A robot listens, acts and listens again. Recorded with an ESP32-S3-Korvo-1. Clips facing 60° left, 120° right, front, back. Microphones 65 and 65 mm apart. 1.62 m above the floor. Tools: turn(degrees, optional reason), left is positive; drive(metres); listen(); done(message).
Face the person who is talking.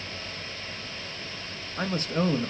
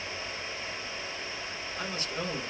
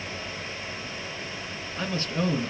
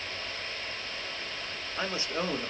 turn(degrees=110, reason="The man speaking: 110° left.")
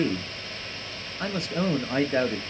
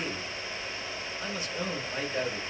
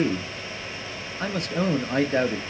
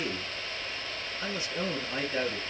turn(degrees=30, reason="The man speaking is now 30° left.")
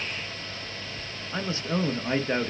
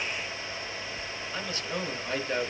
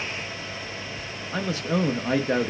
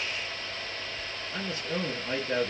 done("Facing the man speaking.")